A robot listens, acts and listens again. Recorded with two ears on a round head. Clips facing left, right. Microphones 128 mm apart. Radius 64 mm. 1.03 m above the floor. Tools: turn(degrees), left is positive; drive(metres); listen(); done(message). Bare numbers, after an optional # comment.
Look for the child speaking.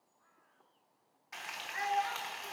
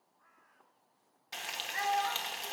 # The child speaking: about 35° right or 145° right.
turn(-35)
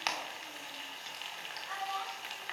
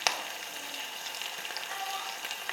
listen()
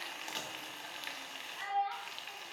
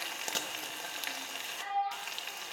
# So it is at 10° left.
turn(10)
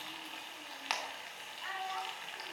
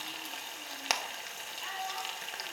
listen()
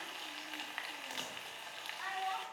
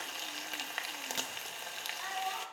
done("Facing the child speaking, over 4 m away.")